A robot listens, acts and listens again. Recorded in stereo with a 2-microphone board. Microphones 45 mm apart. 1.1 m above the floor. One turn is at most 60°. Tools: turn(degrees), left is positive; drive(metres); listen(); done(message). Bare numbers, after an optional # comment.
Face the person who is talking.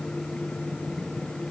listen()
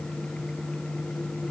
listen()
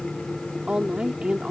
# The woman speaking: about 20° right or 160° right.
turn(-20)
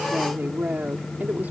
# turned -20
# So it is at 140° right.
turn(-60)
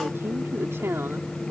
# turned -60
# The woman speaking is now 75° right.
turn(-60)
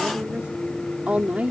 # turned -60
# The woman speaking is now 35° right.
turn(-35)
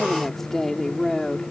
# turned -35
done("Facing the woman speaking.")